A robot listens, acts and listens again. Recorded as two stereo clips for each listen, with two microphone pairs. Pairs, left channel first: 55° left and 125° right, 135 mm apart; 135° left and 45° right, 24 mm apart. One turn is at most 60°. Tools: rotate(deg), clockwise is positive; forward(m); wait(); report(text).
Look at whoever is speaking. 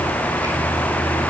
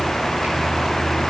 wait()
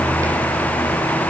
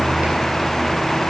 wait()
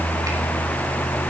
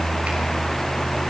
report("I can't make out anyone speaking.")